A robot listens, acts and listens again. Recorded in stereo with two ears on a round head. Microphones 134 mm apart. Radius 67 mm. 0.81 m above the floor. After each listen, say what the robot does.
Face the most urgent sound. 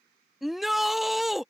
Turn 30° left.
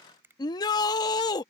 Turn 150° left.
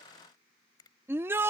Turn 15° right.
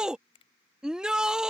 Found it: a shout, straight ahead.